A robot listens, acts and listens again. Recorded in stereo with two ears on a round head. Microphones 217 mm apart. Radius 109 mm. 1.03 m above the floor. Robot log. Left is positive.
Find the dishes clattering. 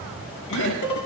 cmd yaw +90
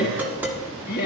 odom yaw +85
end: Found it: dishes clattering, straight ahead.